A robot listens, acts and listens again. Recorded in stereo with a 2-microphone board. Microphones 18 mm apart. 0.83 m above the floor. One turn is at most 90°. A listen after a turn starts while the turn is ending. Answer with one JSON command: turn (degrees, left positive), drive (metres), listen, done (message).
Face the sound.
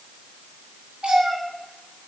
{"turn": -65}
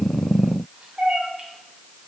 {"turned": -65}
{"turn": -60}
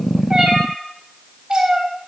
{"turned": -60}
{"turn": -50}
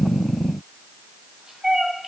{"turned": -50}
{"turn": -25}
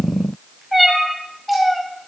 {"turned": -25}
{"done": "Found it: a cat meowing, straight ahead."}